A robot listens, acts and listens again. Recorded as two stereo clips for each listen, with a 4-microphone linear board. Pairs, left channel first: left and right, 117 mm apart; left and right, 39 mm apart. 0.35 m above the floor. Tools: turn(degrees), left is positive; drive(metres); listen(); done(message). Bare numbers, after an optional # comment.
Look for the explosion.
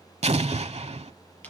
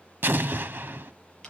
# The explosion: about 70° right or 110° right.
turn(-70)
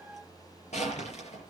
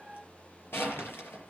listen()
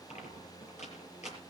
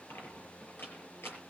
done("I heard an explosion, but can't make it out now. It was about straight ahead or 40° right.")